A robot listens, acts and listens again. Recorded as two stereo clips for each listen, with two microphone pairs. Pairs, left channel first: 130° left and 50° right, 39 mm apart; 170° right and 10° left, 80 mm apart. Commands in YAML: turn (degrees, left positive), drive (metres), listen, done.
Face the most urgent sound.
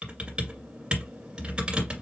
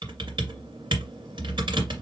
listen: true
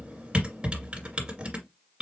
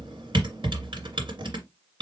listen: true
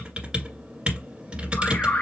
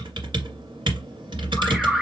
turn: 100
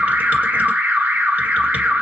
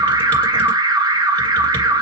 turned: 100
turn: -10
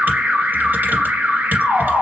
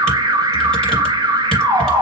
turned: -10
done: "Found it: an alarm, straight ahead."